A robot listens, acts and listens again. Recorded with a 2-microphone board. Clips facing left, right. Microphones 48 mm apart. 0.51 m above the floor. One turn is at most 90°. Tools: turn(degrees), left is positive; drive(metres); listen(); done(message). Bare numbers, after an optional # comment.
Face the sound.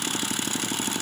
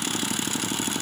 listen()
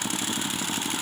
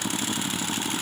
listen()
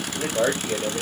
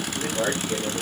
# The man speaking: about 60° left or 120° left.
turn(60)
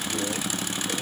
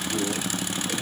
listen()
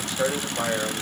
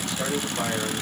# So it is at 35° left.
turn(35)
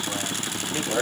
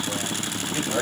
# The man speaking is now 10° left.
turn(10)
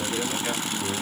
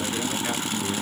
listen()
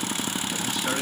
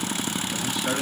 done("Found it: a man speaking, straight ahead, 2 to 4 m away.")